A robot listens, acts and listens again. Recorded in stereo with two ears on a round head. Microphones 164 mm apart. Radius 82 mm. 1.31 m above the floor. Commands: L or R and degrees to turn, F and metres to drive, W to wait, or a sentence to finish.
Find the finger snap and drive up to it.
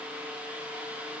W
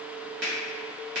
R55
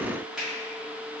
F1.0
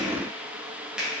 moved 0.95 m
F1.0
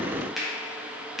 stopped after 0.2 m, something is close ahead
Arrived at the finger snap, straight ahead.